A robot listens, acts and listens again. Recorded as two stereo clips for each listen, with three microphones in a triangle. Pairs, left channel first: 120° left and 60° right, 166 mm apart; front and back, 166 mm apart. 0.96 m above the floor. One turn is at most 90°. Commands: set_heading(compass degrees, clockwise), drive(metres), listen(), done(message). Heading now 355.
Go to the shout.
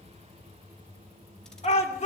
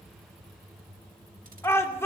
set_heading(280)
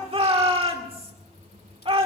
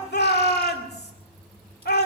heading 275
drive(1.0)
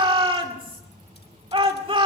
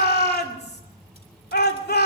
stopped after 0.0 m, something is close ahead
done("Something is in my way. I am facing the shout but have not reached it.")